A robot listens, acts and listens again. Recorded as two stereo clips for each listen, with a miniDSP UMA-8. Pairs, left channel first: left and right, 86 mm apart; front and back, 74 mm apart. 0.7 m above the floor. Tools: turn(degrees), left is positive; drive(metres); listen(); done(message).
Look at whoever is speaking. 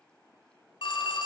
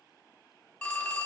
listen()
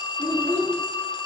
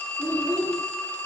turn(degrees=-135)
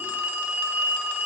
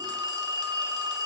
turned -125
turn(degrees=-10)
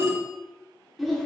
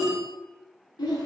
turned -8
done("Facing the child speaking.")